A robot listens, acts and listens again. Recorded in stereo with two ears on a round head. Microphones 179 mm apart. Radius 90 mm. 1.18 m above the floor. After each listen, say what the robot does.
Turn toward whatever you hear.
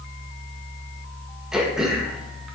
Turn 30° right.
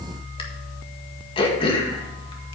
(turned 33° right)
Turn 30° left.
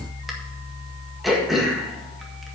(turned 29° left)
Facing the throat clearing, 1 to 2 m away.